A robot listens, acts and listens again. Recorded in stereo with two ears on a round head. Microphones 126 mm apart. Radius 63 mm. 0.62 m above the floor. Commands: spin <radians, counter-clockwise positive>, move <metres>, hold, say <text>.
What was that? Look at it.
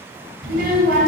spin -1.22
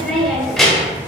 say Facing the child speaking.